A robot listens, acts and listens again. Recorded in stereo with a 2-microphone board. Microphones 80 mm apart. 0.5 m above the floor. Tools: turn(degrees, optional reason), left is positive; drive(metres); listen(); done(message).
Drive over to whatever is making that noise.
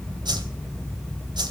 turn(degrees=-65, reason="The whoosh: about 65° right or 115° right.")
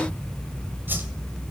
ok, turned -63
turn(degrees=-30, reason="So it is at 30° right.")
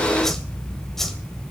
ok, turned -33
drive(metres=1.0)
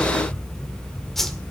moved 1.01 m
drive(metres=1.0)
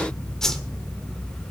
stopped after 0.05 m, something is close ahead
done("Arrived at the whoosh, straight ahead.")